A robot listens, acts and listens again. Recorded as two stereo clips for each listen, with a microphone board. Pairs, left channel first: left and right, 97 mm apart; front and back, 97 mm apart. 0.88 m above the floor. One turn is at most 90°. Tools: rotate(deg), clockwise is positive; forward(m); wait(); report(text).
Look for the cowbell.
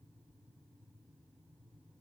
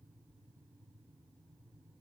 wait()
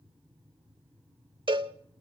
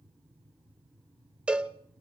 rotate(90)
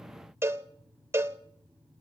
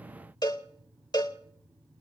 rotate(30)
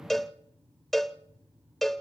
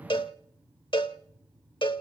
report("Found it: a cowbell, straight ahead.")